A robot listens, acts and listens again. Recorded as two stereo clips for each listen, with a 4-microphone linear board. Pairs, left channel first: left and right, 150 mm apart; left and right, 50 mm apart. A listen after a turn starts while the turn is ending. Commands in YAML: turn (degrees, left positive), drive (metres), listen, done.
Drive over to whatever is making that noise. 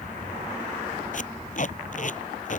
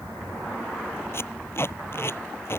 turn: 55
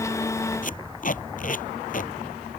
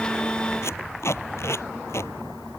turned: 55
turn: 65
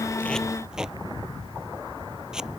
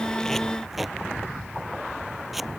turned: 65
drive: 1.0
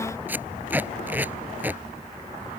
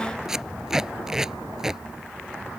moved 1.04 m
turn: -10
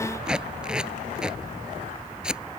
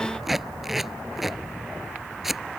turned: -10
drive: 1.0
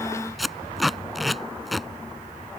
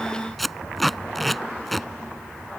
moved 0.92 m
drive: 1.0
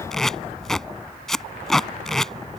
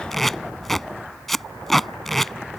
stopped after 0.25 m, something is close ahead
done: "Arrived at the tape being pulled, straight ahead."